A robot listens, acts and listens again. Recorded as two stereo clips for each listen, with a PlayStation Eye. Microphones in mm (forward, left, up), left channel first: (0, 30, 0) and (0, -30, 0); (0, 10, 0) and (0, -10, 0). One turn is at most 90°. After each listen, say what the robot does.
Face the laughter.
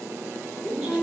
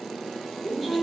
Turn 30° right.
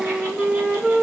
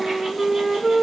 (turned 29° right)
Keep listening.
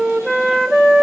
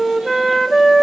Keep listening.
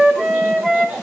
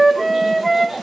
Turn 90° right.
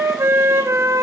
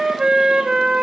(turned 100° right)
Turn 50° right.
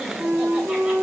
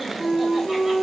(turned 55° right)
Keep listening.
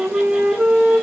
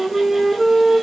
I heard laughter from this way, but can't make it out now.